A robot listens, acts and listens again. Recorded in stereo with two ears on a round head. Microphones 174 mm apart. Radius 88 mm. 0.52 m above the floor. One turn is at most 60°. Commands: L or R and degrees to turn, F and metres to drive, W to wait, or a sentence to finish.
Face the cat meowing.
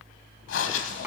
W
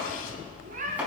R40
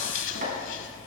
W
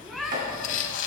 Facing the cat meowing.